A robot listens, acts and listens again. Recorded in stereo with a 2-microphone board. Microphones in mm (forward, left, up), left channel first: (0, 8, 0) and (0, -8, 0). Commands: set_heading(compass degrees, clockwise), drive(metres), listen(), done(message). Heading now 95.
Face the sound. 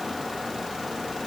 listen()
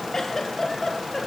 set_heading(55)
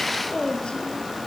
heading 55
set_heading(315)
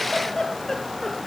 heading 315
set_heading(280)
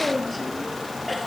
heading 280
done("Facing the giggle, 2 to 4 m away.")